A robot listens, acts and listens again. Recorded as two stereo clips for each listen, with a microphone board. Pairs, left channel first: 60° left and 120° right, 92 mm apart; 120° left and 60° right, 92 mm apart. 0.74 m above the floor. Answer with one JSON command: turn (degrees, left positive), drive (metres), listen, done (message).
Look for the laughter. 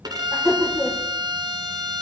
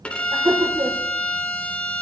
{"turn": -35}
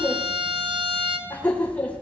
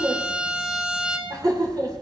{"turn": -15}
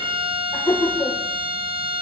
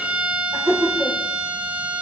{"done": "Found it: laughter, straight ahead."}